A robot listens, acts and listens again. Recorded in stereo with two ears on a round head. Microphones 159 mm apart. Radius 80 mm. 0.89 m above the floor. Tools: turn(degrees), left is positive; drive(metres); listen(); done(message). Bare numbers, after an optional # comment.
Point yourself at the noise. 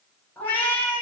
turn(30)
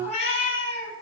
# So it is at 145° left.
turn(145)
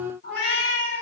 # The cat meowing is now 55° left.
turn(55)
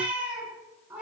done("Found it: a cat meowing, straight ahead, over 4 m away.")